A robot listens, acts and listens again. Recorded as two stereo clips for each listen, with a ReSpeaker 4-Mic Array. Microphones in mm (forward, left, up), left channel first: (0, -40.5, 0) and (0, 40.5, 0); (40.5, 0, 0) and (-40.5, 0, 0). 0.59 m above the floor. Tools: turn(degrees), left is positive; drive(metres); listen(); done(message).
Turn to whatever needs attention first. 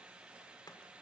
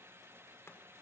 listen()
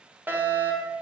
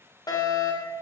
turn(degrees=25)
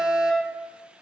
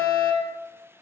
done("Facing the fire alarm.")